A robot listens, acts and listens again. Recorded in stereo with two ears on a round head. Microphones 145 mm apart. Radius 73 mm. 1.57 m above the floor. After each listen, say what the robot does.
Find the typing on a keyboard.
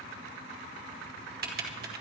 Turn 65° right.
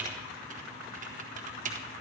Turn 50° right.
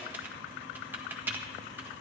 Turn 10° right.
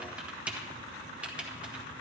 Turn 10° right.
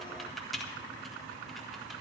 Facing the typing on a keyboard.